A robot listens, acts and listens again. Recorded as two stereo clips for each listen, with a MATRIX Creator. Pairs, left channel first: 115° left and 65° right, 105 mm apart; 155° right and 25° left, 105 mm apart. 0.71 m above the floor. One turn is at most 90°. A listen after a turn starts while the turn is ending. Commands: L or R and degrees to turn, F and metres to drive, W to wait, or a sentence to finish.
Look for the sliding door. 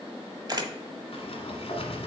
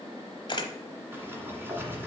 L90
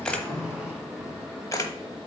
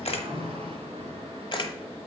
L15
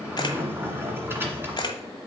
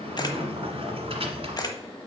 Found it: a sliding door, straight ahead.